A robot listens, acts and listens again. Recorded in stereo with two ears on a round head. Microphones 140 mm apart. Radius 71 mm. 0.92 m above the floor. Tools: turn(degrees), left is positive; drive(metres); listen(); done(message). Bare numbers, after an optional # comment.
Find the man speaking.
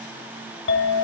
listen()
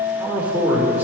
turn(-30)
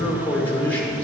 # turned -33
# So it is at 10° left.
turn(10)
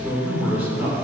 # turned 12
# The man speaking is now 10° right.
turn(-10)
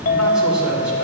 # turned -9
listen()
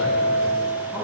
# The man speaking is now 15° right.
turn(-15)
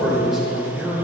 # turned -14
done("Found it: a man speaking, straight ahead.")